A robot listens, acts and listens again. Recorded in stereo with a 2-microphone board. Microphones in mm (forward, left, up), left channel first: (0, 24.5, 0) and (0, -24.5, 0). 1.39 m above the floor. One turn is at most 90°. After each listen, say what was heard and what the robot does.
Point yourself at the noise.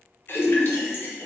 The splash: about 45° left or 135° left. Turn 45° left.
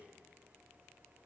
Keep listening.
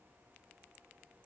I heard a splash, but can't make it out now. It was about straight ahead or 90° left.